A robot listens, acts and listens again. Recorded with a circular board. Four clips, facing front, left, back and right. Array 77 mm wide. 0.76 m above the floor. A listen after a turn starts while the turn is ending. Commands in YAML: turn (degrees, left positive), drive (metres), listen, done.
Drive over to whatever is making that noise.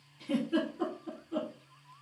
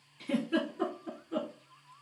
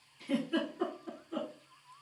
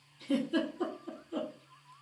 turn: 90
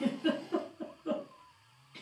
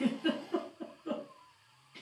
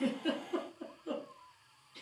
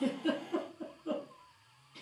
turn: 15
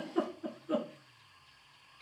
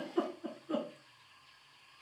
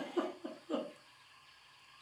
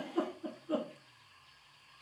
drive: 1.0
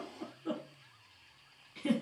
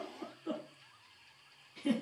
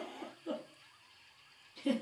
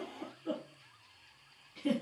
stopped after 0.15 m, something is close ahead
done: "Blocked. The giggle is further on, straight ahead."